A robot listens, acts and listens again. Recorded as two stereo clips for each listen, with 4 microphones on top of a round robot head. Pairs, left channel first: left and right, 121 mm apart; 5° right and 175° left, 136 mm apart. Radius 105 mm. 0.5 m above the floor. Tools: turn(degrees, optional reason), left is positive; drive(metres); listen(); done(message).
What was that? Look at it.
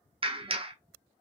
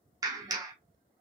turn(degrees=-125, reason="The clap: 125° right.")
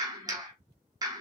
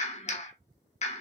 turn(degrees=-35, reason="The clap is now 35° right.")
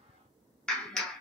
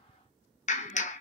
done("Found it: a clap, straight ahead.")